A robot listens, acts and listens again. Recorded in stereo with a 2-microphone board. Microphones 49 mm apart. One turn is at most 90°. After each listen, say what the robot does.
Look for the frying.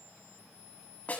Keep listening.
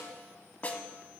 Keep listening.
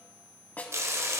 Turn 75° right.
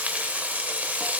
Turn 30° right.
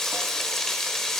Turn 10° left.
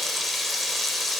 Found it: frying, straight ahead.